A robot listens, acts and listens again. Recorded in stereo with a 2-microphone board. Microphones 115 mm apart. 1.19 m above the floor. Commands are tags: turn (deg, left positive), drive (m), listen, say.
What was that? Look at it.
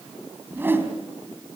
<turn deg="-20"/>
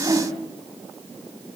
<turn deg="-140"/>
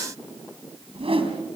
<turn deg="-55"/>
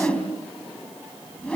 <turn deg="10"/>
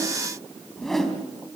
<say>Found it: a whoosh, straight ahead, 2 to 4 m away.</say>